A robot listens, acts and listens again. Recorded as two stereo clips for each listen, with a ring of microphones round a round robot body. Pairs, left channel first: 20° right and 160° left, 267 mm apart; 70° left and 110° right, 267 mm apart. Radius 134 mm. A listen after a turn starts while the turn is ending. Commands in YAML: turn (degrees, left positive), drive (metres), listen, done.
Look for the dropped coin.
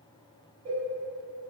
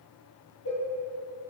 listen: true
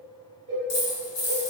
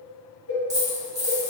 turn: -35
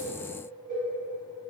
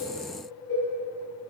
done: "I heard a dropped coin from this way, but can't make it out now."